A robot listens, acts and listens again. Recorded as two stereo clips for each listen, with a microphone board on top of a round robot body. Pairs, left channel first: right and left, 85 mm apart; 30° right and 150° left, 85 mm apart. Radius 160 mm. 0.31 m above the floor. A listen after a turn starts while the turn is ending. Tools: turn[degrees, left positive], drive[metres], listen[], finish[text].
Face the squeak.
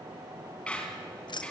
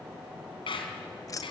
Thought: The squeak: 15° right.
Action: turn[-15]
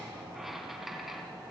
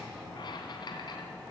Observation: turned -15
Action: listen[]
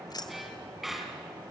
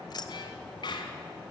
Action: finish[Facing the squeak.]